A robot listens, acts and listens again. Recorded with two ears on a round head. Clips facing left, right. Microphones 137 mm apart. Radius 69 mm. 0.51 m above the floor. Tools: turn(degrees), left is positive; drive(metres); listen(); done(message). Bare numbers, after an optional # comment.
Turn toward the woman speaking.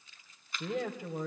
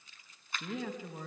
# The woman speaking: about 45° left or 135° left.
turn(45)
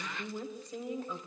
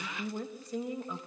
done("Found it: a woman speaking, straight ahead, 2 to 4 m away.")